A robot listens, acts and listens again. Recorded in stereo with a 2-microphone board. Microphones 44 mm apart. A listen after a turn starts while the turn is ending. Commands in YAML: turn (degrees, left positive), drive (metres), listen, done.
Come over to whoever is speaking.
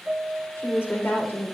turn: 60
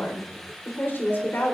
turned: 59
turn: 60
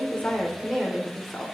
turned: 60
drive: 1.0
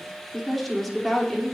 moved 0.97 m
drive: 1.0
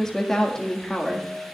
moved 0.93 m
turn: 15
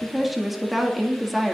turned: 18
drive: 1.0
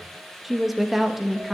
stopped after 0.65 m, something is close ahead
done: "Arrived at the woman speaking, straight ahead."